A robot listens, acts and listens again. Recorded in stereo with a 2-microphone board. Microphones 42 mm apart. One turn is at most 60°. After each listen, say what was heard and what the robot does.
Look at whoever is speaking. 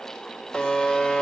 Keep listening.
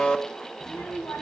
Turn 60° left.
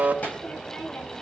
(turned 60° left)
So it is at 40° left. Turn 40° left.
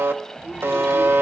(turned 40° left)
The child speaking is now 15° right. Turn 15° right.
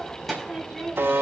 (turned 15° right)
Found it: a child speaking, straight ahead.